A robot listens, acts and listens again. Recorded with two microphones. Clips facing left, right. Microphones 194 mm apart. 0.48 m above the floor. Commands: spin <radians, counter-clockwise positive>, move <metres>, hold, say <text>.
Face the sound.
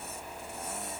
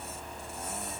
hold
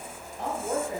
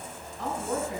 spin 0.96
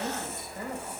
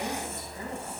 spin 1.05
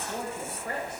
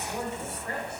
spin 0.35
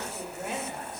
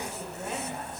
hold
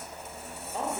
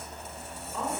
spin 0.44
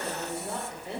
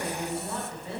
spin 0.35
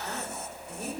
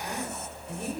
say Facing the woman speaking.